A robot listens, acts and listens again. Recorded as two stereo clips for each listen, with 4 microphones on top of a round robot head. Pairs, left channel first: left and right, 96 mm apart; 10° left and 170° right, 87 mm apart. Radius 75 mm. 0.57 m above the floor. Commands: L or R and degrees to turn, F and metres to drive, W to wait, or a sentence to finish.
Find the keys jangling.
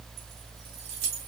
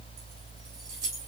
R115
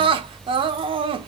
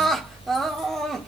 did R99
R15
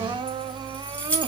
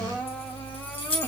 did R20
L15
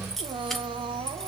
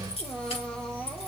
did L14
W
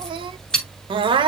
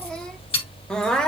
Found it: keys jangling, straight ahead.